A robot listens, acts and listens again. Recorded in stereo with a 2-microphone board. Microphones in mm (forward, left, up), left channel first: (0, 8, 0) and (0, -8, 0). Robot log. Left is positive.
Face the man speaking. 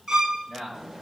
note: The man speaking: about 55° right or 125° right.
cmd yaw -55
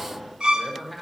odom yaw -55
end: Found it: a man speaking, straight ahead.